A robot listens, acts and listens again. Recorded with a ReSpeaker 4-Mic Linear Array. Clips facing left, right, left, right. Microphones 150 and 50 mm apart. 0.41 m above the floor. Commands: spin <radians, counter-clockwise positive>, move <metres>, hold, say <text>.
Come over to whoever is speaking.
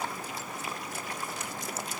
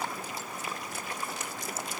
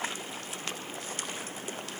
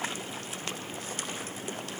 hold
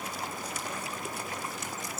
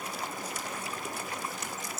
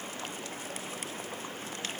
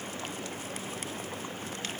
hold
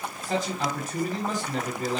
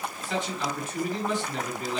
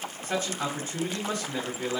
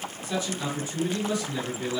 spin 0.70
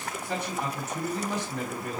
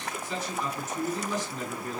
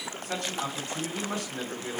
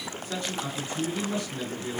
spin 1.57
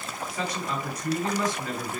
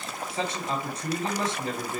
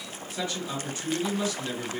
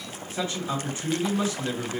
spin -0.52
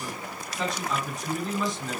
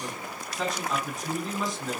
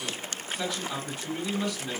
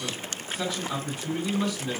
move 1.0
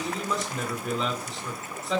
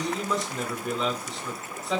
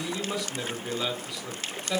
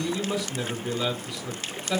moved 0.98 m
move 1.0
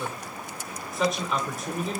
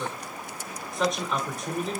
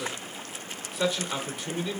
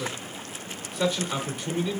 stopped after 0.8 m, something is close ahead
say I am next to the man speaking.